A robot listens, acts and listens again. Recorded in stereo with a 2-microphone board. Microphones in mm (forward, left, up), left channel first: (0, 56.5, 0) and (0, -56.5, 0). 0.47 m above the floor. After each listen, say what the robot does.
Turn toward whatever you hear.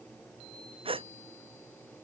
Turn 50° right.
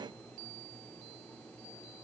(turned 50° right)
Keep listening.
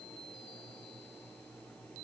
I heard a gasp, but can't make it out now. It was about straight ahead or 80° right.